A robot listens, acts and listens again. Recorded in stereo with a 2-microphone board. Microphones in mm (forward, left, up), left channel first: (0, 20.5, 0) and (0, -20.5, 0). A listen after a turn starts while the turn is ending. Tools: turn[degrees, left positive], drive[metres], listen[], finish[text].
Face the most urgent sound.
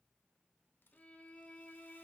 Action: listen[]
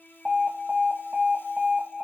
Thought: The alarm: about 30° right or 150° right.
Action: turn[-30]
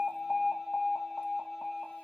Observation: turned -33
Action: finish[Found it: an alarm, straight ahead.]